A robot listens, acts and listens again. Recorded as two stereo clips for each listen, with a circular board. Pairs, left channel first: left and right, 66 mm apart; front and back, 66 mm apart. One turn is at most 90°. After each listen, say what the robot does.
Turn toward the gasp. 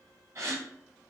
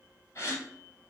Turn 45° right.
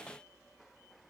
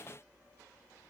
Facing where the gasp came from. I can't hear it now.